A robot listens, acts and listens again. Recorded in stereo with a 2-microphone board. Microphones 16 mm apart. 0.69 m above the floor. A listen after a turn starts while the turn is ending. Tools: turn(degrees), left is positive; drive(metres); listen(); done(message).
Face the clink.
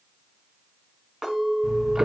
turn(degrees=-35)
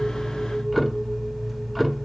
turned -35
listen()
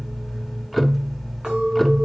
turn(degrees=-105)
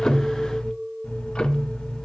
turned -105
done("Facing the clink.")